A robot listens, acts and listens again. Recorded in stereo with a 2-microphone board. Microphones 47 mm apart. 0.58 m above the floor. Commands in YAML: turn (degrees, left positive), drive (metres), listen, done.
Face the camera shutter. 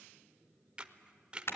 turn: -20
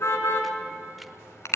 listen: true
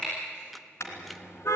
listen: true
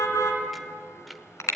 done: "I heard a camera shutter, but can't make it out now. It was about straight ahead or 140° right."